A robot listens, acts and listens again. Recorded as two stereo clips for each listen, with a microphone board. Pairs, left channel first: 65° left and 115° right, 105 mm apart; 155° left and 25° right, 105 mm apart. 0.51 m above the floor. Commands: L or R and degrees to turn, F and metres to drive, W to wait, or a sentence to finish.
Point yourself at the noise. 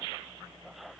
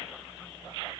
W
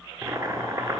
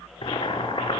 R170
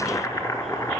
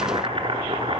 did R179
L10
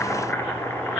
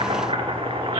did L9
Found it: boiling, straight ahead.